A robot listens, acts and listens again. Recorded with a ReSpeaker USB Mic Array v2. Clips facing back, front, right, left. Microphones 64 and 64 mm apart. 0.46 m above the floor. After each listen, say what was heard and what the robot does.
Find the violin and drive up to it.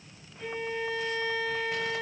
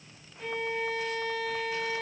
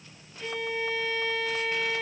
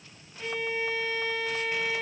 The violin: 30° left. Turn 30° left.
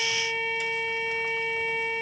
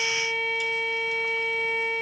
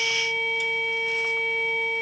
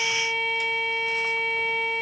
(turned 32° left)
Drive 1.0 m forward.
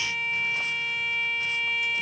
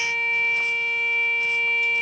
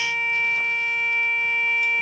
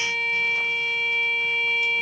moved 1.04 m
The violin is now 10° right. Turn 10° right.
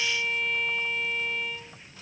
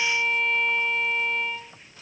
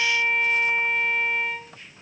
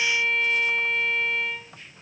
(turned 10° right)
Drive 1.0 m forward.
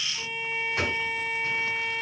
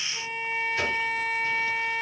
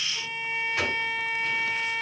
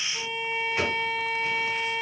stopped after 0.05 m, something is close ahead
Arrived at the violin, straight ahead.